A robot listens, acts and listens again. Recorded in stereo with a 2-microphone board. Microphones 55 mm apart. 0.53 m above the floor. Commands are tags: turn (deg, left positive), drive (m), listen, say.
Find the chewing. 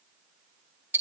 <listen/>
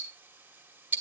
<listen/>
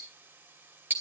<say>I can't make out chewing to turn to.</say>